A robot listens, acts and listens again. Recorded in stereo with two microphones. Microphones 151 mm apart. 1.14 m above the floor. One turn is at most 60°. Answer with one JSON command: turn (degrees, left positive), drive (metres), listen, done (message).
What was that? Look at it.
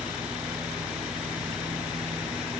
{"listen": true}
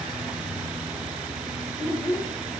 {"turn": 20}
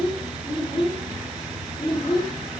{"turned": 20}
{"turn": 35}
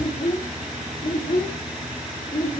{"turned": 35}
{"turn": 60}
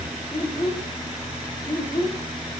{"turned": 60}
{"turn": 35}
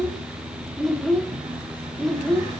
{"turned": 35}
{"done": "Found it: a child speaking, straight ahead."}